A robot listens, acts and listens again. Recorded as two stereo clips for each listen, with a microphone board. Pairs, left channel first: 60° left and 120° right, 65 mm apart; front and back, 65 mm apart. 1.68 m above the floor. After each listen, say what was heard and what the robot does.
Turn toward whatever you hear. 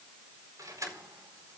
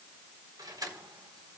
The keys jangling: 155° right. Turn 155° right.
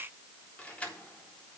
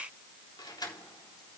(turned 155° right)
The keys jangling is now 10° right. Turn 10° right.
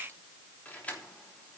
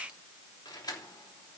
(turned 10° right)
The keys jangling is now 10° right. Turn 10° right.
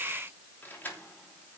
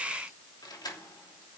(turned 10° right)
Facing the keys jangling, 2 to 4 m away.